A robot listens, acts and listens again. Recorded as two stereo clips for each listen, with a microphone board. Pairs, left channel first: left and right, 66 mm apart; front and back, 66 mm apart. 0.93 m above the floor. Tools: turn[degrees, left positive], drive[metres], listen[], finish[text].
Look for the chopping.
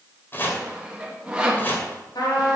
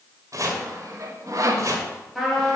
Thought: The chopping: 150° left.
Action: turn[150]
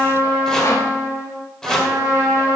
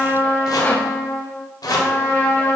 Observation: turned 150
Thought: The chopping is now 10° left.
Action: turn[10]
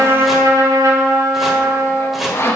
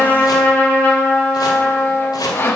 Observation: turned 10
Action: finish[Found it: chopping, straight ahead.]